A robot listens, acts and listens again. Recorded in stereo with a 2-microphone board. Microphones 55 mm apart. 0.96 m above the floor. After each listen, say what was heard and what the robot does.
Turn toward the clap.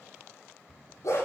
Keep listening.
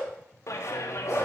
The clap: about 70° left or 110° left. Turn 70° left.
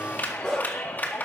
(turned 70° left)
So it is at 35° left. Turn 35° left.
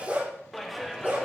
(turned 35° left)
Facing the clap, 1 to 2 m away.